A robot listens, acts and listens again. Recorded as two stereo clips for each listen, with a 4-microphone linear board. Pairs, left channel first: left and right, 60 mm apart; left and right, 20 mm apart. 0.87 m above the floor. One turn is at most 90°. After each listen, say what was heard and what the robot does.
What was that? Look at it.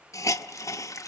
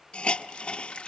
The hiss: about 55° left or 125° left. Turn 55° left.
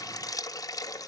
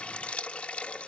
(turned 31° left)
So it is at 90° left. Turn 90° left.
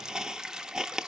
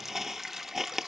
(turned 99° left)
Found it: a hiss, straight ahead.